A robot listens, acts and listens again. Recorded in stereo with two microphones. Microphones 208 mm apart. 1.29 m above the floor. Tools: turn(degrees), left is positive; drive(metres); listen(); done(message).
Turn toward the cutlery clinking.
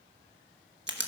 listen()
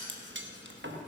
turn(degrees=-65)
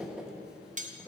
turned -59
turn(degrees=-40)
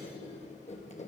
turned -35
listen()
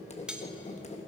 done("Found it: cutlery clinking, straight ahead, under 1 m away.")